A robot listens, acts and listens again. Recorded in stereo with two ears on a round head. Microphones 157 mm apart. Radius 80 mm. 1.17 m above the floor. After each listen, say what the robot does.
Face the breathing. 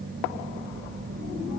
Keep listening.
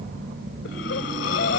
Turn 70° left.
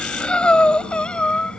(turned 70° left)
Found it: breathing, straight ahead.